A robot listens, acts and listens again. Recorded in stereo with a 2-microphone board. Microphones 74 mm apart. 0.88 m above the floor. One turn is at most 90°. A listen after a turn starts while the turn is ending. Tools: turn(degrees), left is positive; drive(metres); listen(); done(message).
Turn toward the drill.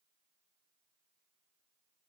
listen()
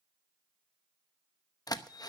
turn(degrees=60)
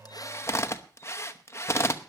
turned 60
turn(degrees=45)
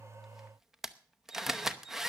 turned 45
done("Facing the drill, under 1 m away.")